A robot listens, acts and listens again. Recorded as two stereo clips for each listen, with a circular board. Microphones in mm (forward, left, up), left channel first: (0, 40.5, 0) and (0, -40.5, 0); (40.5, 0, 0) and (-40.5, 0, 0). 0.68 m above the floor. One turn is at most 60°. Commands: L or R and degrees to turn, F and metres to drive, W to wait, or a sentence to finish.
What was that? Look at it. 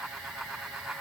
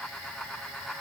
W
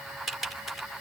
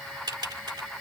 L60
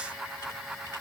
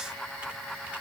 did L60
L60
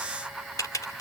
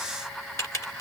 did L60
L50
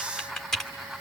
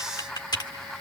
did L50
Facing the typing on a keyboard.